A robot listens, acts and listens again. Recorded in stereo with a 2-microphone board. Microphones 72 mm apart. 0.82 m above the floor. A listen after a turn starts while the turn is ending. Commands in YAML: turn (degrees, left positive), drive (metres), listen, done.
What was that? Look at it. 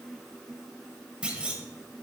turn: -30
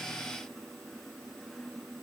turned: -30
listen: true
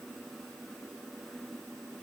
done: "I heard a clunk, but can't make it out now. It was about 15° left or 135° right."